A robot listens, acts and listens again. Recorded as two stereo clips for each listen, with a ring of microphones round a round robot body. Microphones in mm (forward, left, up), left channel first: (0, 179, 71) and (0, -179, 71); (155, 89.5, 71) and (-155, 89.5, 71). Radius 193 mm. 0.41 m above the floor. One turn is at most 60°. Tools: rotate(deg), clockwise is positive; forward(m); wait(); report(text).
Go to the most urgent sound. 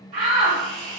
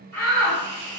rotate(60)
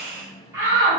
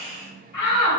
rotate(10)
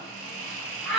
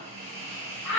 forward(1.0)
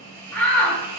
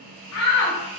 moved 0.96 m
forward(1.0)
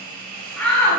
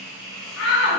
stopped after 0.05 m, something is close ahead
report("I am next to the shout.")